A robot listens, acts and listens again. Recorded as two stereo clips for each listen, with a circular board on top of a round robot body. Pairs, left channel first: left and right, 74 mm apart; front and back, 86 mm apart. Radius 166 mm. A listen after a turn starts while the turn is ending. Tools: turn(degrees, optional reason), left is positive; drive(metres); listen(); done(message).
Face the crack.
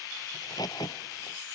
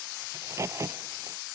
turn(degrees=120, reason="The crack: 120° left.")
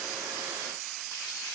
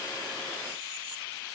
done("I heard a crack from this way, but can't make it out now.")